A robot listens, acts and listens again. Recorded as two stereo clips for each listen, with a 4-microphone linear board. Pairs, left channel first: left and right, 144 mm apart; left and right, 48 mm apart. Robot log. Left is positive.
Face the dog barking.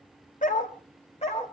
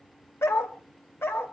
note: The dog barking: about 50° left or 130° left.
cmd yaw +50
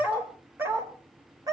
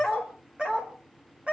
note: So it is at 25° right.
cmd yaw -25
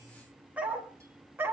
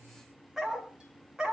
note: The dog barking is now 15° right.
cmd yaw -15
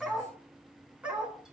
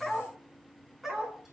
note: The dog barking is now 10° right.
cmd yaw -10
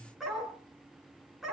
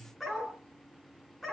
end: Found it: a dog barking, straight ahead.